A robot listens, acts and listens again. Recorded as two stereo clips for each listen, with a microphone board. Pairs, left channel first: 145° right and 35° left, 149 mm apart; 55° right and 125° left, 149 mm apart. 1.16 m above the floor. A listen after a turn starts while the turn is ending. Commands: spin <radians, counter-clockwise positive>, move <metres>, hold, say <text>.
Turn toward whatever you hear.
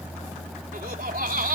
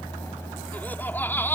spin 0.35
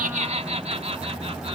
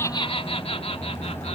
spin -0.17
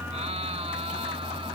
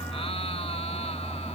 hold
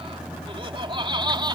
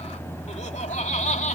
spin -0.44
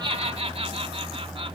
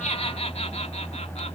spin -0.26
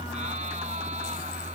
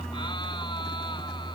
hold
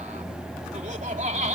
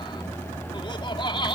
say Found it: laughter, straight ahead.